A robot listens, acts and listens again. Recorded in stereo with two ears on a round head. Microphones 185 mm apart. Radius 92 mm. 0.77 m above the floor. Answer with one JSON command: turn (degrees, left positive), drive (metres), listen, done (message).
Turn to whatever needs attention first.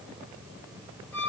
{"listen": true}
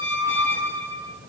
{"listen": true}
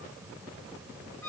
{"done": "I can't make out anything urgent, only a squeak."}